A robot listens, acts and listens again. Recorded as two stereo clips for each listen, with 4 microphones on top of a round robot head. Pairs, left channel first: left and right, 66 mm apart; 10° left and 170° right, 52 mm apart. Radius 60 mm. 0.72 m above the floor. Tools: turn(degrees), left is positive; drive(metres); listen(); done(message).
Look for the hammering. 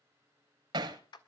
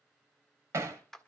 turn(degrees=-120)
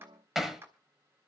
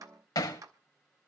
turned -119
done("Found it: hammering, straight ahead, 1 to 2 m away.")